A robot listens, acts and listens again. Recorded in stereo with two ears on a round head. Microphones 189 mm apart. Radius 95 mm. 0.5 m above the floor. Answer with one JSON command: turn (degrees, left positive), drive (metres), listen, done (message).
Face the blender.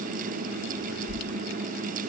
{"listen": true}
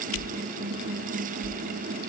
{"listen": true}
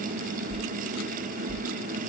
{"done": "I can't make out a blender, only a whoosh."}